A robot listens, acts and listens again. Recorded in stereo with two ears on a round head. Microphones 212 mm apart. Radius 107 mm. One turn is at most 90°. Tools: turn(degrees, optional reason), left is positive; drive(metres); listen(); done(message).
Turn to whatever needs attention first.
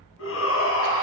turn(degrees=60, reason="The shout: about 60° left or 120° left.")
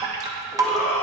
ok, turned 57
turn(degrees=35, reason="So it is at 35° left.")
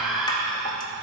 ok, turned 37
done("Facing the shout.")